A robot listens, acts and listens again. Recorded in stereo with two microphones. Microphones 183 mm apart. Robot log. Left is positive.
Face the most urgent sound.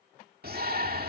note: The shout: about 55° right or 125° right.
cmd yaw -55
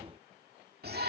note: So it is at 65° right.
cmd yaw -65
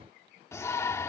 note: The shout is now 15° left.
cmd yaw +15
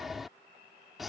end: Facing the shout.